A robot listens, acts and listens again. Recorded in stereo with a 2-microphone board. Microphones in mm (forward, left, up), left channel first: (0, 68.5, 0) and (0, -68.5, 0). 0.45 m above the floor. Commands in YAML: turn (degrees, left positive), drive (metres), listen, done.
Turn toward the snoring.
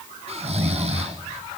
turn: -50
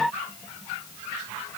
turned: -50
listen: true
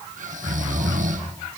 turn: -75
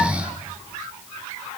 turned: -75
turn: -10
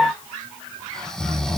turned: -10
done: "Facing the snoring."